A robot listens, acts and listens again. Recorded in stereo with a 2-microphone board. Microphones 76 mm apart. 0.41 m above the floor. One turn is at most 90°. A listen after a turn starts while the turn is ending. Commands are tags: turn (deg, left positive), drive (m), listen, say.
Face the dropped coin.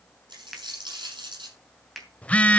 <turn deg="-75"/>
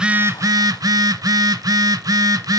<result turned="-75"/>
<listen/>
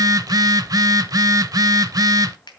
<say>I heard a dropped coin, but can't make it out now. It was about straight ahead or 30° right.</say>